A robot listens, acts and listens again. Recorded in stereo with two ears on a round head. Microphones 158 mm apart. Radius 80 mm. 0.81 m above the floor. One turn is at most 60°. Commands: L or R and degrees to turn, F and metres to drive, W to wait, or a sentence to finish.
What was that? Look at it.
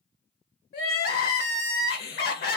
L60
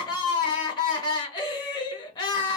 L30
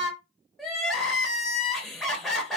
Found it: crying, straight ahead, under 1 m away.